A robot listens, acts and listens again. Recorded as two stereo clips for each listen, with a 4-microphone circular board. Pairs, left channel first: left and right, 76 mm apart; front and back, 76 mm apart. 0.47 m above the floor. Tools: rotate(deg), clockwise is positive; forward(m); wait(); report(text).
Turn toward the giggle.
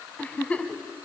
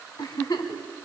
rotate(-20)
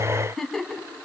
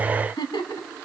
report("Found it: a giggle, straight ahead.")